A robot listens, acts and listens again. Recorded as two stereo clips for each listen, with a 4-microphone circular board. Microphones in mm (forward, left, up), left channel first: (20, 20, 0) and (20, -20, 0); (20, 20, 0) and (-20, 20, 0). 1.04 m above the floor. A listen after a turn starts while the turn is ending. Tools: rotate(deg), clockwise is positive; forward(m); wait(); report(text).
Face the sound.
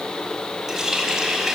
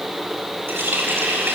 rotate(165)
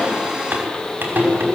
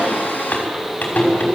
rotate(50)
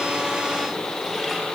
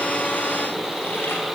wait()
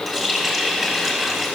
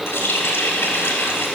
report("Found it: a running tap, straight ahead, over 4 m away.")